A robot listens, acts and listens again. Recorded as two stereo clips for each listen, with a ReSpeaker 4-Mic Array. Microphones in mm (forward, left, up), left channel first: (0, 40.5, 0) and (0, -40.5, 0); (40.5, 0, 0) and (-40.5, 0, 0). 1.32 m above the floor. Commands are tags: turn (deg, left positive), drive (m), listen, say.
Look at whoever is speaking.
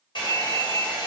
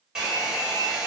<listen/>
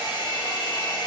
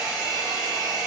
<listen/>
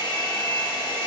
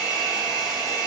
<say>I can't make out anyone speaking to turn to.</say>